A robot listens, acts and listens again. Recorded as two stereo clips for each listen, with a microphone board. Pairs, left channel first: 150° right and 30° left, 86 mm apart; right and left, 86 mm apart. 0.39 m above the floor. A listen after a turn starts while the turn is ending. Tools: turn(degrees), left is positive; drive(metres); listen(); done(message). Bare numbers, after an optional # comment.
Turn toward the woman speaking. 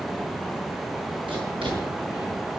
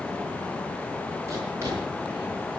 listen()
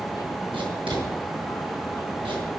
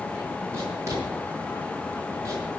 listen()
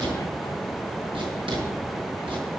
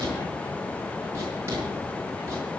done("I can't make out a woman speaking, only writing.")